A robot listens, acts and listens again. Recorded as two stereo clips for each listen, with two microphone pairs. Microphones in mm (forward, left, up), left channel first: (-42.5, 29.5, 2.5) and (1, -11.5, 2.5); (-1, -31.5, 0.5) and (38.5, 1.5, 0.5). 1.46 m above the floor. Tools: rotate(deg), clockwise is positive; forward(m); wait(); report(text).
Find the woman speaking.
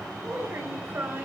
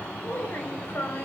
rotate(100)
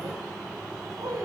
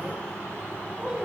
rotate(35)
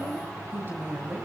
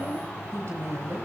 rotate(-10)
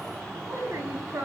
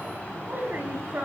report("Facing the woman speaking.")